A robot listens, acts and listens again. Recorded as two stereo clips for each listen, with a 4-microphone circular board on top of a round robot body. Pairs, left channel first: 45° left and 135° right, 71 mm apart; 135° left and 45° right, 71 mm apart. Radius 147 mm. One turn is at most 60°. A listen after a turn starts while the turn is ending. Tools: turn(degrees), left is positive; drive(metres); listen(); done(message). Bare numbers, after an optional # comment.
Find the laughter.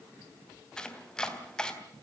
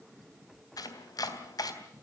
listen()
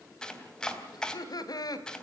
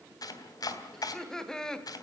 # The laughter: 55° left.
turn(55)
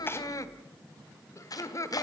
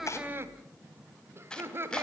# The laughter is now 10° left.
turn(10)
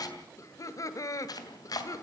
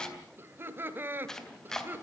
# The laughter is now 15° left.
turn(15)
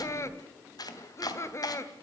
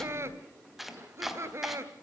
done("Found it: laughter, straight ahead.")